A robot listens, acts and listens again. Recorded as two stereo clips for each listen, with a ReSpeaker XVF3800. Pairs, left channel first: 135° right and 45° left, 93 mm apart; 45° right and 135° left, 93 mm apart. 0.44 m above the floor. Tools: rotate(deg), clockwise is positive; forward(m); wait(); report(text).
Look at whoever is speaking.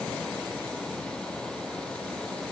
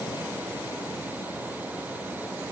wait()
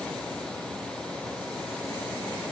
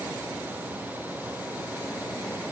wait()
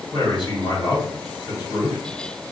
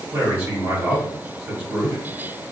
rotate(165)
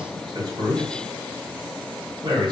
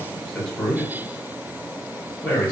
rotate(-30)
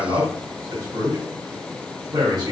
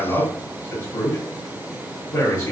report("Facing the man speaking, 1 to 2 m away.")